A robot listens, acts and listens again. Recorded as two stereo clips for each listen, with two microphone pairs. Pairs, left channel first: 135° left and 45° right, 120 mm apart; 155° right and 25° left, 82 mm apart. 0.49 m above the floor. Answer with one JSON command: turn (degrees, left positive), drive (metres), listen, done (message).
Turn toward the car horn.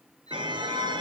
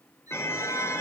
{"turn": -95}
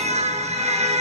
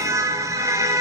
{"turn": -25}
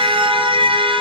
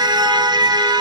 {"done": "Found it: a car horn, straight ahead, over 4 m away."}